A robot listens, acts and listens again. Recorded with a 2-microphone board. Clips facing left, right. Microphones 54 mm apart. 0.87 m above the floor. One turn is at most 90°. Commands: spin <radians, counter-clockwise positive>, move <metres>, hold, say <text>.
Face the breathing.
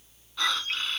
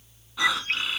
spin -0.52
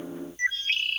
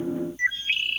hold
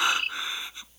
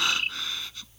spin 0.35
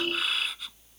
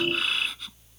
say Facing the breathing.